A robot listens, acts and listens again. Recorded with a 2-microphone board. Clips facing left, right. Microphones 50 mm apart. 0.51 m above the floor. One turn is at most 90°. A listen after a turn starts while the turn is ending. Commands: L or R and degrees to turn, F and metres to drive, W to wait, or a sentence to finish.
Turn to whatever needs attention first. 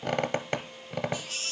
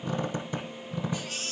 R20
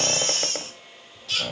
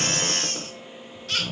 R90
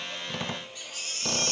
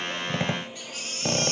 R35
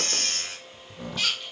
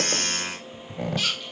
Found it: a baby crying, straight ahead, over 4 m away.